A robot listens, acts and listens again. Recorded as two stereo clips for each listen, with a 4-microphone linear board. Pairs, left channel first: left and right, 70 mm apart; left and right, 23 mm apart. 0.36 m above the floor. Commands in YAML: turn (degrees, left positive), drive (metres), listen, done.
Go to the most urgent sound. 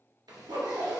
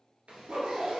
listen: true
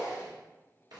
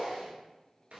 listen: true
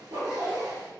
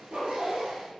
done: "I can't make out anything urgent to turn to."